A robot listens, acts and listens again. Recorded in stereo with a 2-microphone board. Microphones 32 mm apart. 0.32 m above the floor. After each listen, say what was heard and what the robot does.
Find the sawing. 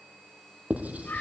Keep listening.
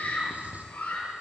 Keep listening.
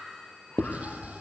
I can't make out sawing to turn to.